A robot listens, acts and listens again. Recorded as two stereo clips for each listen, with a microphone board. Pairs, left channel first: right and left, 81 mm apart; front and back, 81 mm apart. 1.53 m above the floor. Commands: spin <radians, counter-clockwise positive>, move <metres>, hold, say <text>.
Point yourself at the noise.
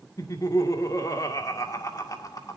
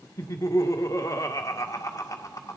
spin -0.79
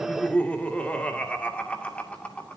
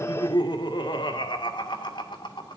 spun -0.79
spin -0.26
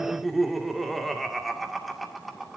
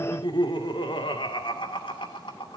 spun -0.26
say Facing the laughter.